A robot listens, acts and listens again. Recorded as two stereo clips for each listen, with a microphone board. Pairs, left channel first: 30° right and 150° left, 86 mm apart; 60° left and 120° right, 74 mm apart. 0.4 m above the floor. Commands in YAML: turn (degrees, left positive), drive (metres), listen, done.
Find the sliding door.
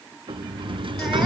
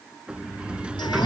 turn: 165
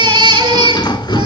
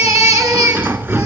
turn: -60
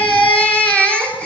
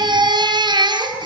listen: true
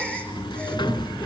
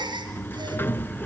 done: "Found it: a sliding door, straight ahead."